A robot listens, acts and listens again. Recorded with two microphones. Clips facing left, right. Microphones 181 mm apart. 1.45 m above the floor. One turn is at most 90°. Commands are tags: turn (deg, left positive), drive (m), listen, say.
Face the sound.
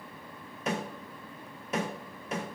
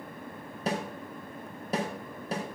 <turn deg="-35"/>
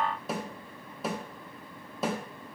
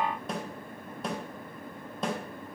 <say>Found it: a snare drum, straight ahead.</say>